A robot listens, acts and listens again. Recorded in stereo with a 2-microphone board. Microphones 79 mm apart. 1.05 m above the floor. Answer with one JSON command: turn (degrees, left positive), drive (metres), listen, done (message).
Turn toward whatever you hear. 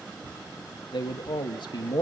{"turn": 70}
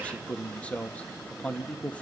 {"turn": 15}
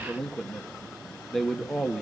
{"done": "Facing the man speaking."}